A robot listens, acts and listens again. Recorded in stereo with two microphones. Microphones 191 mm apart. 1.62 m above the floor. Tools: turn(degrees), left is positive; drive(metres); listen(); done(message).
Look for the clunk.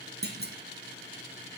turn(degrees=-60)
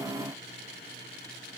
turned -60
listen()
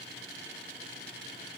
done("I heard a clunk, but can't make it out now. It was about straight ahead or 60° right.")